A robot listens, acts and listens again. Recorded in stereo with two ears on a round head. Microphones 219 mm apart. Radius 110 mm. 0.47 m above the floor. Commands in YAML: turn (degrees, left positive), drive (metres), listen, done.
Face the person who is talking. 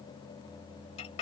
listen: true
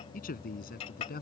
turn: 40
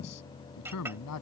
turn: 105
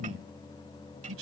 turn: -55
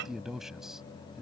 done: "Facing the man speaking."